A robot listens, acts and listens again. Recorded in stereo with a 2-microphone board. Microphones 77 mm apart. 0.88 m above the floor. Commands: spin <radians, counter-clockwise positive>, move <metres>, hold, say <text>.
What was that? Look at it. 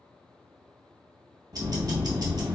spin -0.96
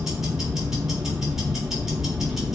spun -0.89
say Facing the ticking.